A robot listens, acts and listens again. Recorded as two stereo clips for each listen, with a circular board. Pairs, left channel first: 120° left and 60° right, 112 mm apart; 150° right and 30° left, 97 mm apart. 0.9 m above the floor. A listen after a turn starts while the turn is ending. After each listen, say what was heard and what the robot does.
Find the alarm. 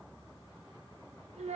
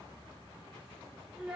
Keep listening.
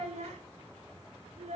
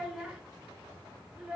Keep listening.
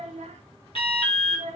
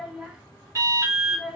The alarm: 85° left. Turn 85° left.
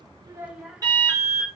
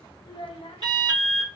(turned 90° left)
Facing the alarm, 2 to 4 m away.